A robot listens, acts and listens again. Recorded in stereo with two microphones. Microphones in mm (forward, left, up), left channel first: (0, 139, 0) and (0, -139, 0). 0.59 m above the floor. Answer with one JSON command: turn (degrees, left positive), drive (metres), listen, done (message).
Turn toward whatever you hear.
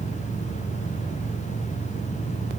{"listen": true}
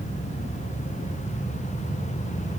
{"listen": true}
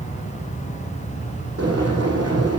{"turn": -65}
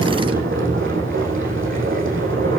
{"turn": -50}
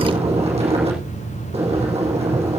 {"turn": -25}
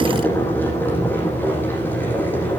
{"done": "Found it: boiling, straight ahead, over 4 m away."}